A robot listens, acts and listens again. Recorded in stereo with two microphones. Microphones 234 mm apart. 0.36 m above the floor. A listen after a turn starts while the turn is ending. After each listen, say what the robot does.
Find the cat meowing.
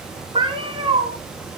Turn 25° right.
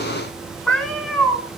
Found it: a cat meowing, straight ahead, 2 to 4 m away.